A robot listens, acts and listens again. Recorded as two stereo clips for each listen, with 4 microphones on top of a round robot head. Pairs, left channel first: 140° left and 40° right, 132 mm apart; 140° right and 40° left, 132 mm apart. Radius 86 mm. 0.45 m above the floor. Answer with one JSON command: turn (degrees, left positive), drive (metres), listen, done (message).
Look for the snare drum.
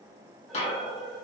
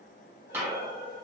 {"turn": 115}
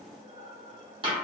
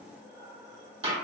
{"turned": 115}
{"done": "Found it: a snare drum, straight ahead."}